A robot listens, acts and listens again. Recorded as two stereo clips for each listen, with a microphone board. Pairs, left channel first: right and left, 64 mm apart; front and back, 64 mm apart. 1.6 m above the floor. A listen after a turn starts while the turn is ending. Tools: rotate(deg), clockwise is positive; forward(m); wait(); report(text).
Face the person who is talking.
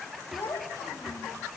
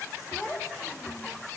rotate(65)
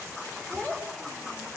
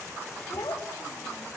rotate(-10)
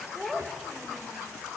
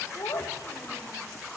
rotate(-10)
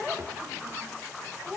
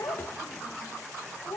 rotate(-20)
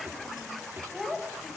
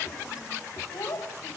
report("Facing the child speaking, over 4 m away.")